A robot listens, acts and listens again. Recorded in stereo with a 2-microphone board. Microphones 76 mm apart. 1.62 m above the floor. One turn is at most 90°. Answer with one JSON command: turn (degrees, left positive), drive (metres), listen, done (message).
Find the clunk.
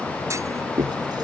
{"turn": -40}
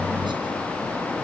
{"listen": true}
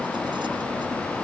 {"done": "I heard a clunk, but can't make it out now. It was about straight ahead or 100° right."}